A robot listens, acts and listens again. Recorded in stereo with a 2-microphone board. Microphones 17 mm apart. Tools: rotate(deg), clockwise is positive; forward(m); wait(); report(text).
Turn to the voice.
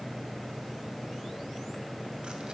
wait()
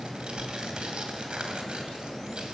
wait()
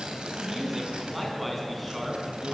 rotate(-30)
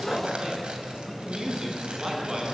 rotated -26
rotate(30)
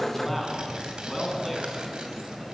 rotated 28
report("Facing the man speaking.")